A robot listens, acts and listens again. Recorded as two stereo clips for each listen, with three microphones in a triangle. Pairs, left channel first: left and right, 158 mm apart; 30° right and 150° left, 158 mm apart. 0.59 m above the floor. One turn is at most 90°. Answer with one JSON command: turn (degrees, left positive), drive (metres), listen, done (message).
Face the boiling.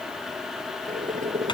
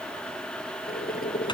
{"turn": -50}
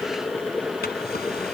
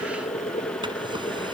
{"turn": 10}
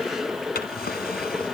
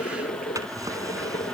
{"done": "Facing the boiling."}